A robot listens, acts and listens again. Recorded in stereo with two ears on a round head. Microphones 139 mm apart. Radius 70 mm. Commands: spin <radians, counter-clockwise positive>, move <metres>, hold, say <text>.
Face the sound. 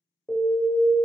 spin 0.52
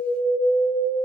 spin -0.35
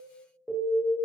say Facing the alarm.